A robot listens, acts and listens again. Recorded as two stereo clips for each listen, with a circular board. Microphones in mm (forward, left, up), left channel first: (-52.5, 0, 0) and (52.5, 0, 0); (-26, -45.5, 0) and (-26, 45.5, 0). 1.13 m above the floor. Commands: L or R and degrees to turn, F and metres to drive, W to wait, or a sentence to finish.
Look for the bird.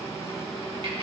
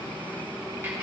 W
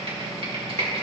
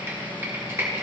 W
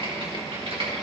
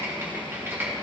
I can't make out a bird to turn to.